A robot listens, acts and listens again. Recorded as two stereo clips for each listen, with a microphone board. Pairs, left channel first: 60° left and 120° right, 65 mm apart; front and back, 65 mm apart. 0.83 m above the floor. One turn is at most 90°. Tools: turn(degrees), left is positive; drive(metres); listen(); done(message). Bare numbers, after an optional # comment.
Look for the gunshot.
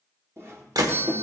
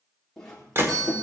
# The gunshot: 130° right.
turn(-90)
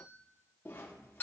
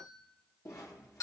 # Nothing new. It was at 40° right.
turn(-40)
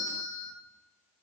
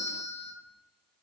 done("I heard a gunshot from this way, but can't make it out now.")